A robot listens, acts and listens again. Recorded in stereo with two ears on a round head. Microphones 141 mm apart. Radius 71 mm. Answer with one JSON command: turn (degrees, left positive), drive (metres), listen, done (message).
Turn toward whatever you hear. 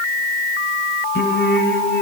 {"turn": 90}
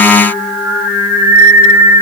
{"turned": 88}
{"turn": -10}
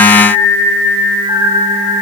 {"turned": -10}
{"turn": -10}
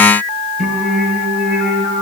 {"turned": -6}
{"done": "Facing the singing, over 4 m away."}